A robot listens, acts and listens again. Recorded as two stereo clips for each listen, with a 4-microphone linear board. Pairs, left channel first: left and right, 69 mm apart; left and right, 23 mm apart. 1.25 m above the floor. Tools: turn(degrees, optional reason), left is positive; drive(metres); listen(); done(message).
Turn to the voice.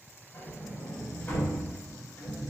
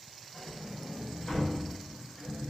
listen()
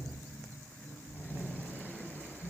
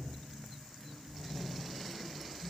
listen()
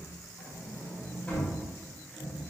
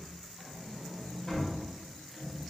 done("I can't make out anyone speaking, only a sliding door.")